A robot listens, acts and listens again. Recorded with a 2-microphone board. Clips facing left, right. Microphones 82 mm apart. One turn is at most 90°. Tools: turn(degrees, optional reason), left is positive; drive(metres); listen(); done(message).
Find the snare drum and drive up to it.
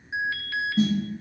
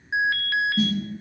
turn(degrees=25, reason="The snare drum: about 25° left or 155° left.")
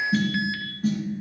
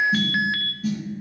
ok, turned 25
turn(degrees=90, reason="So it is at 130° left.")
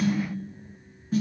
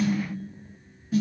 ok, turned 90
turn(degrees=40, reason="The snare drum is now 40° left.")
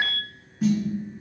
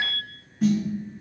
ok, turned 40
drive(metres=1.0)
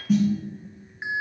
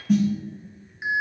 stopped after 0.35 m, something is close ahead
done("Something is in my way. I am facing the snare drum but have not reached it.")